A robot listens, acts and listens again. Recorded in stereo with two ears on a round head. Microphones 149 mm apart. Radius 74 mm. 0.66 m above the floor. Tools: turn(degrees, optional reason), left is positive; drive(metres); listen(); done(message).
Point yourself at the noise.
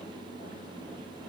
listen()
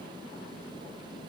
listen()
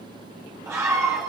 turn(degrees=-15, reason="The scream: about 15° right or 165° right.")
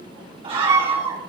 turn(degrees=-150, reason="So it is at 150° right.")
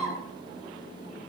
done("Found it: a scream, straight ahead.")